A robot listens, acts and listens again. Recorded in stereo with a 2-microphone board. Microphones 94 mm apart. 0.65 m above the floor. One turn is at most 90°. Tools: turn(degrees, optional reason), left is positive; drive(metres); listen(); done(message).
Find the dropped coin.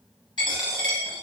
turn(degrees=55, reason="The dropped coin: about 55° left or 125° left.")
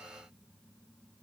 listen()
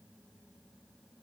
done("I heard a dropped coin, but can't make it out now. It was about straight ahead or 70° left.")